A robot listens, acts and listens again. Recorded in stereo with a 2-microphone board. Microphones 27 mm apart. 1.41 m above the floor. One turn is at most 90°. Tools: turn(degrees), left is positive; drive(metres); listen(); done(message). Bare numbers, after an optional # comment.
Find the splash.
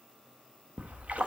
# The splash: about 55° right or 125° right.
turn(-55)
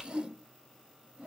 # So it is at 15° right.
turn(-15)
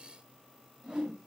done("I heard a splash from this way, but can't make it out now.")